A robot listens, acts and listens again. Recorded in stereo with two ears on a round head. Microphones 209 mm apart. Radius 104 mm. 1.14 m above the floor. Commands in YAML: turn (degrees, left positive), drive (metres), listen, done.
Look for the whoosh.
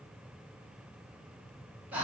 listen: true
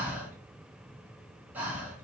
listen: true
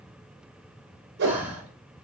turn: -45
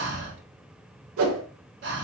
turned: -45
turn: -80
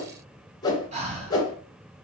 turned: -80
turn: 20
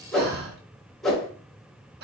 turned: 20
done: "Facing the whoosh, under 1 m away."